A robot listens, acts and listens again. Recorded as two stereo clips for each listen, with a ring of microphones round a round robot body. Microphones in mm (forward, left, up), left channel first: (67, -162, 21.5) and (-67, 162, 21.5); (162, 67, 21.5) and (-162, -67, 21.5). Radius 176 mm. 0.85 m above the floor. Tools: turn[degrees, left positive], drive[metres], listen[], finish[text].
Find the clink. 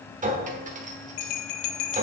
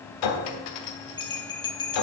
Thought: The clink: 40° left.
Action: turn[40]
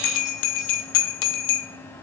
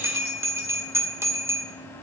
Action: listen[]
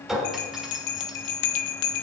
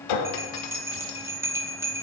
Thought: The clink is now 25° left.
Action: turn[25]
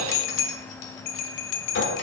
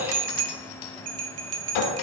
Action: finish[Found it: a clink, straight ahead.]